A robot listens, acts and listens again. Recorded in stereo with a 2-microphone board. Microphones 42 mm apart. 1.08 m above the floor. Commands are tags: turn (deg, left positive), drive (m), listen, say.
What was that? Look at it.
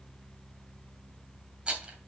<turn deg="-20"/>
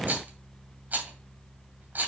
<turn deg="-135"/>
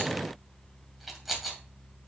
<say>Found it: a rattle, straight ahead.</say>